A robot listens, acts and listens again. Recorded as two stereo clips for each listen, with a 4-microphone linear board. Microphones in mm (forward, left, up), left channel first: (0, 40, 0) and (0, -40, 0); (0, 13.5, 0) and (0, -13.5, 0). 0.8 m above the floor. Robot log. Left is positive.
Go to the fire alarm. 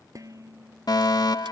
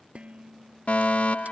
note: The fire alarm: about 60° left or 120° left.
cmd yaw +60
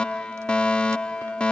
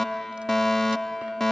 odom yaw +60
note: So it is at 15° left.
cmd yaw +15
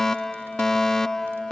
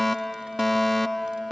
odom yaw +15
cmd fwd 1.0
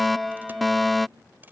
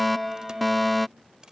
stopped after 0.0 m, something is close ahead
end: Something is in my way. I am facing the fire alarm but have not reached it.